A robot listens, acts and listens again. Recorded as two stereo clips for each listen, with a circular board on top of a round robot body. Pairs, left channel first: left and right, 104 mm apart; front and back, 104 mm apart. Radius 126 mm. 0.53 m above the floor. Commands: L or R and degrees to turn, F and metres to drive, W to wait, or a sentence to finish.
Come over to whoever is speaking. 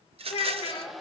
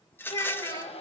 L60
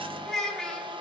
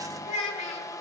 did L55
F1.0
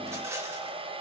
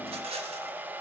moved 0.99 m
W
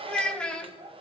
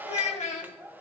L10
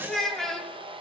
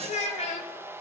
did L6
F1.0
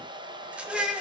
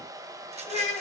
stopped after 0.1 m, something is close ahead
Blocked. The child speaking is further on, straight ahead.